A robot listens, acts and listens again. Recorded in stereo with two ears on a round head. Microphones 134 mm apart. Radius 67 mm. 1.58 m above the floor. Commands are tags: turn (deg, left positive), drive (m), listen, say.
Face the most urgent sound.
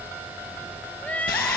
<turn deg="30"/>
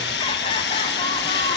<listen/>
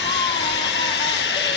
<listen/>
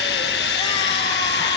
<say>I heard crying, but can't make it out now. It was about 20° right or 140° left.</say>